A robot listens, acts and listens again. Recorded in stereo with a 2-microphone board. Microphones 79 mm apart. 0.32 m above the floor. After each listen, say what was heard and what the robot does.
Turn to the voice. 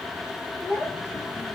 The child speaking: about 25° left or 155° left. Turn 25° left.
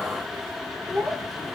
Facing the child speaking.